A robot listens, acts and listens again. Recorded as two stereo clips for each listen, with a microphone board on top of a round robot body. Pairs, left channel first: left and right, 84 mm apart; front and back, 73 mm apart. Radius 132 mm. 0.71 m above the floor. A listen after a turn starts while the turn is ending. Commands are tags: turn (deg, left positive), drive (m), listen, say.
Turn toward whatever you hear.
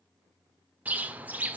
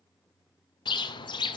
<turn deg="-15"/>
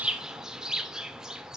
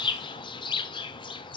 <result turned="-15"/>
<say>Facing the bird, under 1 m away.</say>